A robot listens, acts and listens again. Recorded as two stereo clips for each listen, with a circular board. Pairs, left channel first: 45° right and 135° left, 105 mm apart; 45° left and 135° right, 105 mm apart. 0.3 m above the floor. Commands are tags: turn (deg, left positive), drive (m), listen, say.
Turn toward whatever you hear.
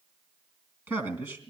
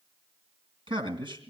<turn deg="-165"/>
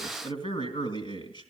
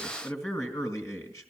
<turn deg="-15"/>
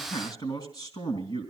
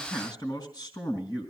<say>Facing the man speaking, 2 to 4 m away.</say>